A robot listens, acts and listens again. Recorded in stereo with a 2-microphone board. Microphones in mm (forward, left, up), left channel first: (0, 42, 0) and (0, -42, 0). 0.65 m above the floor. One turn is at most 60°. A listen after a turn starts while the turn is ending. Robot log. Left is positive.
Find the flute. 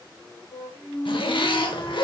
note: The flute: about 25° left or 155° left.
cmd yaw +25
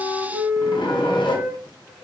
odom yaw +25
end: Facing the flute, 1 to 2 m away.